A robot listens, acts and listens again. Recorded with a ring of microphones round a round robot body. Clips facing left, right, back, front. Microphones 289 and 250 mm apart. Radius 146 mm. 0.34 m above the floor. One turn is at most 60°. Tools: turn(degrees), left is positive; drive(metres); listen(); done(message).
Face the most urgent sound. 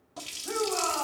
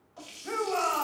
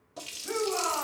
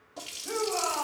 turn(degrees=-60)
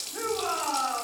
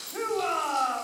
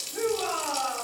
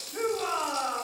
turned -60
turn(degrees=-60)
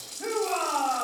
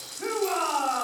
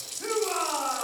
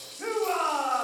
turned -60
turn(degrees=-30)
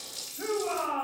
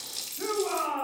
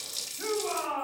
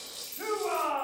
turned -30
turn(degrees=-10)
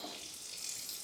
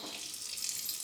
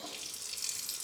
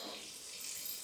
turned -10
listen()
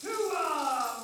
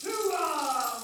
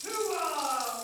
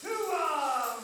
done("Facing the shout, 2 to 4 m away.")